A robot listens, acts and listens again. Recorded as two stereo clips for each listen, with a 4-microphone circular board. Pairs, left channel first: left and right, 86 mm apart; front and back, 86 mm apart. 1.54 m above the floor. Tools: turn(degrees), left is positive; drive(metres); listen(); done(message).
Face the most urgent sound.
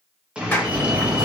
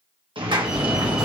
turn(degrees=-100)
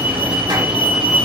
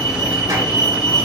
turn(degrees=-20)
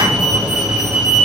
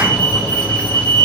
done("Facing the fire alarm.")